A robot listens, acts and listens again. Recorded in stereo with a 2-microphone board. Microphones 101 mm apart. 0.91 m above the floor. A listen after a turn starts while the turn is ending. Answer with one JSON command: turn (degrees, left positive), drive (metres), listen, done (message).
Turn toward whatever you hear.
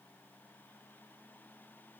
{"listen": true}
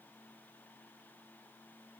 {"listen": true}
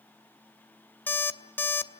{"turn": 20}
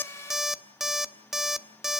{"done": "Found it: an alarm clock, straight ahead."}